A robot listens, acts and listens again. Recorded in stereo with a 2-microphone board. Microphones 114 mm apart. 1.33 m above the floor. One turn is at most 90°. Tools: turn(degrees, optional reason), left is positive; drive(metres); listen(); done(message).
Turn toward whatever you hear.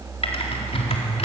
turn(degrees=60, reason="The typing on a keyboard: about 60° left or 120° left.")
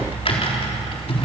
turn(degrees=60, reason="So it is at 60° left.")
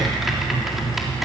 done("Found it: typing on a keyboard, straight ahead.")